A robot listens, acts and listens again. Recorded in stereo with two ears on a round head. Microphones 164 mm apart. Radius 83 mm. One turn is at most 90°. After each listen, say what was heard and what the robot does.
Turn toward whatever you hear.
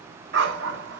The dog barking: about 70° right or 110° right. Turn 70° right.
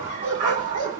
So it is at 40° right. Turn 40° right.
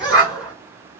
Facing the dog barking, over 4 m away.